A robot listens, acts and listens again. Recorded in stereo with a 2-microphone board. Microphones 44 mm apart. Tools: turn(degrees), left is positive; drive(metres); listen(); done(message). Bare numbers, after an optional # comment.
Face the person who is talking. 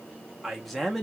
turn(30)
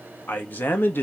# So it is at 125° left.
turn(125)
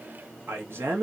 # The man speaking is now 70° right.
turn(-70)
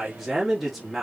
done("Found it: a man speaking, straight ahead.")